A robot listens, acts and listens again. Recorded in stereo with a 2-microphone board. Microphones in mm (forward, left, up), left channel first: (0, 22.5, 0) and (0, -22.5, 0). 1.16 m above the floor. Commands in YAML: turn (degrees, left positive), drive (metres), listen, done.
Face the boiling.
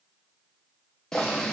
turn: 30
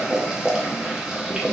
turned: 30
turn: -15
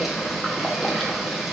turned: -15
done: "Found it: boiling, straight ahead."